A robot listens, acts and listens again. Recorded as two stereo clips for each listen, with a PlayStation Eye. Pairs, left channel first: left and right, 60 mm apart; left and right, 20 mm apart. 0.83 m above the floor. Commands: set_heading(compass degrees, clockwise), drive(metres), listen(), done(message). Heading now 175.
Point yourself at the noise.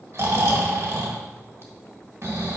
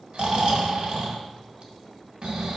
set_heading(230)
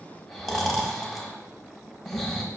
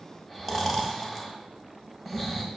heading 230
done("Facing the snoring, 1 to 2 m away.")